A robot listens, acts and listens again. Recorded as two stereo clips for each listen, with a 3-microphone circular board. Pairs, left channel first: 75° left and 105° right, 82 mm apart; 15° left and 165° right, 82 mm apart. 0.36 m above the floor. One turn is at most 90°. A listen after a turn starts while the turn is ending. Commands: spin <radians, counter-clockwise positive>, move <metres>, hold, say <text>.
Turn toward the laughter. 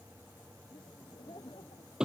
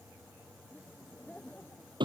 spin 1.40
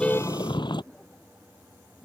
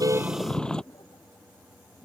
say Found it: laughter, straight ahead.